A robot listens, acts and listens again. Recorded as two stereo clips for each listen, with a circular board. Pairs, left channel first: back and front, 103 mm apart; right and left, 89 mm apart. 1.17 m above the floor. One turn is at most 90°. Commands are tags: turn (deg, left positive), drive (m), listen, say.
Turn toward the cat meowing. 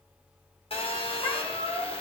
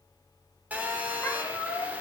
<turn deg="-90"/>
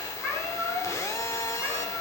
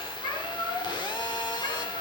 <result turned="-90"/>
<turn deg="-90"/>
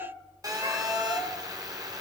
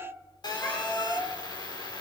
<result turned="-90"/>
<turn deg="-25"/>
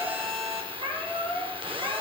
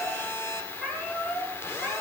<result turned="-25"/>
<say>Found it: a cat meowing, straight ahead, over 4 m away.</say>